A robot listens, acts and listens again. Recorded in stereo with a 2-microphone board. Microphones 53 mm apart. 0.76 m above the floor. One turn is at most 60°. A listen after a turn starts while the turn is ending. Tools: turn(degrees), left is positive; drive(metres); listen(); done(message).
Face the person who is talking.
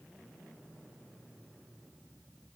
listen()
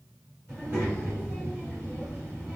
turn(degrees=-35)
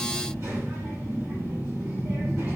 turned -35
turn(degrees=-60)
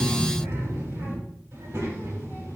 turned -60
turn(degrees=-60)
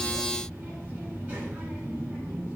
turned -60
turn(degrees=-25)
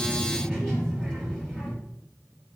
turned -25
turn(degrees=10)
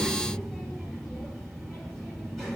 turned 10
done("Found it: a child speaking, straight ahead.")